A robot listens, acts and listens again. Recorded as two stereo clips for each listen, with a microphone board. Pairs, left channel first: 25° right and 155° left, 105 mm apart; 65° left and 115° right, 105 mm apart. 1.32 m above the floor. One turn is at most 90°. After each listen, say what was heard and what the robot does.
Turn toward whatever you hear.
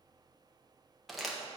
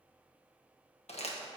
The crumpling: 65° left. Turn 65° left.
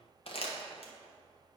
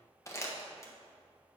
Facing the crumpling.